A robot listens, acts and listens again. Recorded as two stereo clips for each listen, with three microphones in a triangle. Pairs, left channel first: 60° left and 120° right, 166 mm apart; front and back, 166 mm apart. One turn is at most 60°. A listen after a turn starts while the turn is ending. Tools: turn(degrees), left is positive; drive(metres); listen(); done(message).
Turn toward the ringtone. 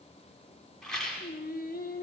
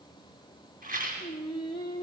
listen()
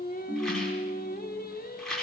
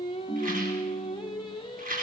turn(degrees=-60)
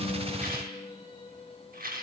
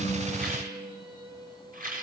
turn(degrees=-25)
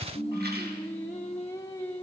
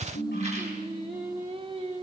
done("Facing the ringtone, over 4 m away.")